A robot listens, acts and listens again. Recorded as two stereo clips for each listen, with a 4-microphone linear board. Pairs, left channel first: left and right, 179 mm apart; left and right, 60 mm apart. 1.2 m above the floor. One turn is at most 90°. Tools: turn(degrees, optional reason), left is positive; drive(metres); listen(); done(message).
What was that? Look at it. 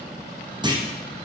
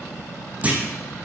turn(degrees=-25, reason="The clunk: about 25° right or 155° right.")
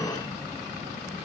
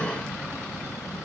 listen()
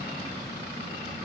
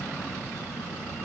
done("I heard a clunk, but can't make it out now. It was about straight ahead or 130° right.")